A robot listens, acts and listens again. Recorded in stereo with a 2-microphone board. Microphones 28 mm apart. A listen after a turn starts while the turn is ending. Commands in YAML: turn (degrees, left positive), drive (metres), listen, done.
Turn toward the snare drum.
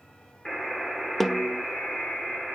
turn: 30
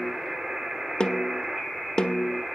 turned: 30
turn: 145
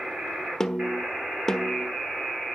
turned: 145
turn: 15
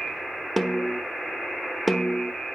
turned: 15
done: "Found it: a snare drum, straight ahead."